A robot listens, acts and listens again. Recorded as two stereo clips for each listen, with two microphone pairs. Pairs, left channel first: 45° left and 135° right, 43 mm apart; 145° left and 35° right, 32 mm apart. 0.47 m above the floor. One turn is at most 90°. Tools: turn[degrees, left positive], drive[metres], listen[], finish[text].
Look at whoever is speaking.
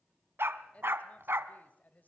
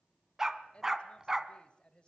Thought: The woman speaking: 90° left.
Action: turn[90]
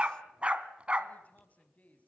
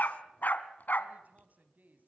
Thought: The woman speaking is now 10° right.
Action: turn[-10]
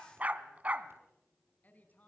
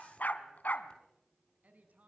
Action: finish[Facing the woman speaking.]